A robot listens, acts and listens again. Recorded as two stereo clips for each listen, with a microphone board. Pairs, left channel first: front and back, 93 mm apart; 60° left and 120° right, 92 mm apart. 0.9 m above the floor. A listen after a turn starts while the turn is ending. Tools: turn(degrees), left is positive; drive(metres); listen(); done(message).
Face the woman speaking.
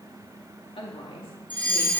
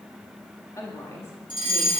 done("Facing the woman speaking.")